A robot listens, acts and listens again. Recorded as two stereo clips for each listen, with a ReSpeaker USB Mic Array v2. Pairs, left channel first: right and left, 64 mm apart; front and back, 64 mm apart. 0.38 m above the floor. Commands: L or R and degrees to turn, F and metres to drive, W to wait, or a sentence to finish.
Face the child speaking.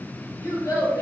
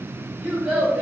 R115
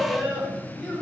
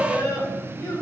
R25
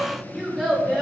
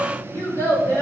Found it: a child speaking, straight ahead, 2 to 4 m away.